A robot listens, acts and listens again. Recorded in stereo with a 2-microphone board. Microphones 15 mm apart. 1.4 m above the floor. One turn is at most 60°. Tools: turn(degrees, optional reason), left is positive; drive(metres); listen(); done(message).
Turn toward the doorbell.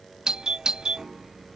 turn(degrees=-55, reason="The doorbell: about 55° right or 125° right.")
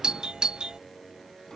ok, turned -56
turn(degrees=-60, reason="So it is at 65° right.")
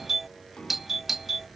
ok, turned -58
turn(degrees=-10, reason="The doorbell is now 10° right.")
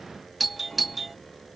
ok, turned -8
done("Found it: a doorbell, straight ahead.")